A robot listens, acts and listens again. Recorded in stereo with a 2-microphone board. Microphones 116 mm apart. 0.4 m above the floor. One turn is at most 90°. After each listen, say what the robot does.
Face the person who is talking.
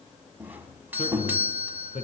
Turn 75° left.
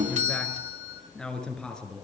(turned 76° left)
Facing the man speaking, over 4 m away.